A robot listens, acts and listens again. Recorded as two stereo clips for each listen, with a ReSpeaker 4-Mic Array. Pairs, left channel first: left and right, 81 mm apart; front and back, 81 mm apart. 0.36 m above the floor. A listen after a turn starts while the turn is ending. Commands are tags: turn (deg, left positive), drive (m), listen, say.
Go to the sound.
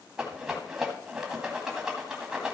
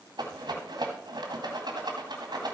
<turn deg="-175"/>
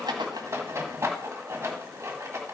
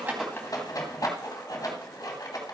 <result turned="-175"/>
<turn deg="-40"/>
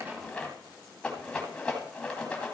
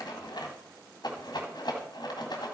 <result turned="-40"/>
<turn deg="15"/>
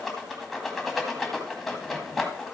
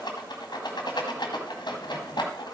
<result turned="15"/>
<drive m="1.0"/>
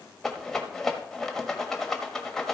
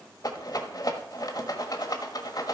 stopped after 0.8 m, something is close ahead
<say>Arrived at the rattle, straight ahead.</say>